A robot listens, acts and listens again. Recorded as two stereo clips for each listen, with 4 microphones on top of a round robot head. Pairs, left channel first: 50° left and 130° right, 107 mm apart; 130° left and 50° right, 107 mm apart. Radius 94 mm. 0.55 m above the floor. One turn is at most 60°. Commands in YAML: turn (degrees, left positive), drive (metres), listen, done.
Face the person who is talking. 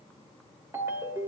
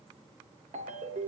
listen: true
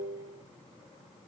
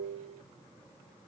listen: true
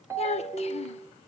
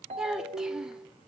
turn: 35
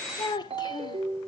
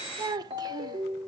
done: "Found it: a child speaking, straight ahead."